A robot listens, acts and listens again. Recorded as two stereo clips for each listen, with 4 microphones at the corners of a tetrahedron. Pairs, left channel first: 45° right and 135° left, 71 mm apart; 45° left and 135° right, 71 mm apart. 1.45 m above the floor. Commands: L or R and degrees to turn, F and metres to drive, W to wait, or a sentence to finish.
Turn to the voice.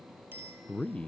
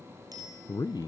L25
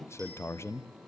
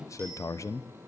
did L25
Facing the man speaking, under 1 m away.